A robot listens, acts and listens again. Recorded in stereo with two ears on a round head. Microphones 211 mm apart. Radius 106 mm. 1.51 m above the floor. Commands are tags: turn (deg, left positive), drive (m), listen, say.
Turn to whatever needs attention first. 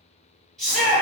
<turn deg="30"/>
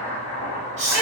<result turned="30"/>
<turn deg="-30"/>
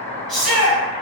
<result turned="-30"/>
<say>Facing the shout, 1 to 2 m away.</say>